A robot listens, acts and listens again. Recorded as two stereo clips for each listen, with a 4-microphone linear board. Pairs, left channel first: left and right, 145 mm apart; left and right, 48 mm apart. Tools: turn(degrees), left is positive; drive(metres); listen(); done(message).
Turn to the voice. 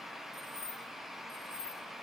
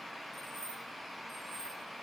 listen()
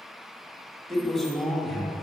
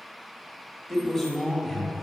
turn(degrees=30)
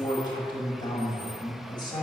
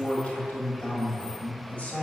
turn(degrees=145)
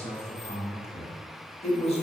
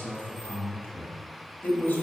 turn(degrees=50)
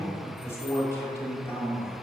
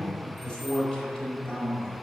turn(degrees=20)
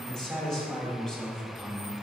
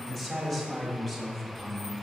done("Found it: a man speaking, straight ahead, 1 to 2 m away.")